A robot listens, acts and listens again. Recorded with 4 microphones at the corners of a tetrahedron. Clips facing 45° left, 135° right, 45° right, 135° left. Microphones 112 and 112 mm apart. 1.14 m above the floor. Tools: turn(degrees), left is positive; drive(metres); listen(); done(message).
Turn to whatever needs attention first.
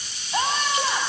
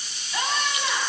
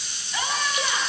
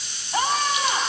turn(degrees=95)
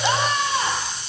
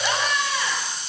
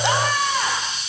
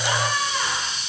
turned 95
turn(degrees=-15)
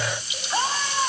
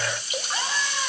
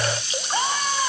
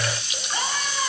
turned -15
done("Found it: a scream, straight ahead, over 4 m away.")